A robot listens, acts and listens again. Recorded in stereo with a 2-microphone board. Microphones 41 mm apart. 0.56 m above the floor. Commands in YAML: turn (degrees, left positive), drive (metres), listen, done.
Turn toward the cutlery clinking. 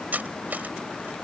turn: -45
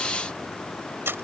turn: -90
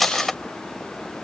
done: "Facing the cutlery clinking."